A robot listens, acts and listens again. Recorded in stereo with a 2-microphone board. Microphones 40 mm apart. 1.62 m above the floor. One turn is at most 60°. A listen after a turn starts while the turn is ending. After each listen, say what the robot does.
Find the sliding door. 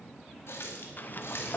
Turn 45° left.
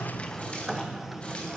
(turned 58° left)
Facing the sliding door.